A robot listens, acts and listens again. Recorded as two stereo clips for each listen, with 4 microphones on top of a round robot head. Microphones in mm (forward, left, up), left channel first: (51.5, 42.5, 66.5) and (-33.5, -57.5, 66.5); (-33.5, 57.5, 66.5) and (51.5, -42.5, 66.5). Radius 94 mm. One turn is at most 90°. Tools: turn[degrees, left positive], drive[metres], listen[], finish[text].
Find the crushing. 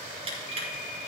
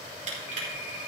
Thought: The crushing: 85° right.
Action: turn[-85]
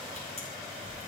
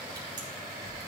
Action: listen[]
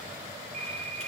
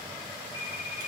Action: listen[]
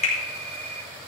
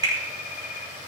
Thought: The crushing is now 10° left.
Action: turn[10]
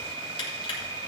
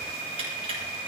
Action: listen[]
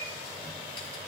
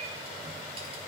Action: listen[]
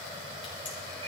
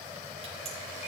Action: finish[I heard crushing from this way, but can't make it out now.]